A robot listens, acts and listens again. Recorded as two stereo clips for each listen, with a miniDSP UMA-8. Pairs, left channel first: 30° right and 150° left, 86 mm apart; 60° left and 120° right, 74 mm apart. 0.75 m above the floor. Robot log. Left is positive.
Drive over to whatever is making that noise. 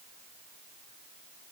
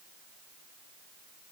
cmd idle
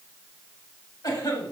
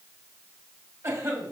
note: The cough: 60° right.
cmd yaw -60
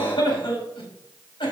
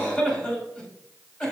note: The cough is now 10° right.
cmd yaw -10
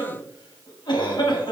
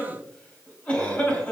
cmd fwd 1.0
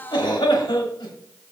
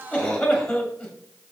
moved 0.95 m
cmd fwd 1.0
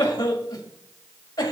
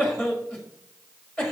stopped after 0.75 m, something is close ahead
end: Arrived at the cough, straight ahead.